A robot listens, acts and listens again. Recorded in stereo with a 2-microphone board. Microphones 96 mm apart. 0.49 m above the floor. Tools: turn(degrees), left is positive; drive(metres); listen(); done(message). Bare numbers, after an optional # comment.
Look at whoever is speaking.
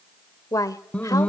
# The woman speaking: about 35° left or 145° left.
turn(35)
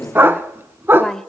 done("Found it: a woman speaking, straight ahead, 1 to 2 m away.")